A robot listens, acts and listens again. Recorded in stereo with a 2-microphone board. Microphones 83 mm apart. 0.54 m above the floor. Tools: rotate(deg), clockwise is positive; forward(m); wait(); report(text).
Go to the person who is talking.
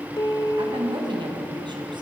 rotate(70)
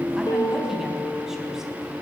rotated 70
forward(1.0)
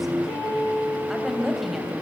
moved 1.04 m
forward(1.0)
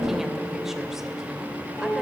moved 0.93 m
wait()
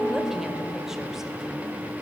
wait()
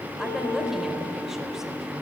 report("Facing where the woman speaking came from. I can't hear it now. I did not reach it.")